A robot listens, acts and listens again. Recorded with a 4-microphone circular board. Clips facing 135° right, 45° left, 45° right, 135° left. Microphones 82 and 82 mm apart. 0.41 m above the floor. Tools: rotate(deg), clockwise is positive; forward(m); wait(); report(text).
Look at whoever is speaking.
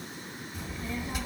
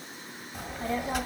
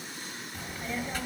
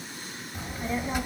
rotate(-65)
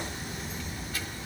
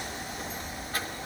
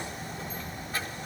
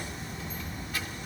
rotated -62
report("Found it: a child speaking, straight ahead.")